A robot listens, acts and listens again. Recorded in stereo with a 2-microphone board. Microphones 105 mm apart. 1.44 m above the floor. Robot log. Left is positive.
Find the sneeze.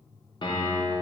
cmd idle
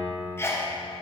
note: The sneeze: about 25° left or 155° left.
cmd yaw +25
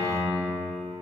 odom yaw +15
cmd idle
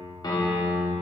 end: I heard a sneeze, but can't make it out now. It was about 10° left or 140° left.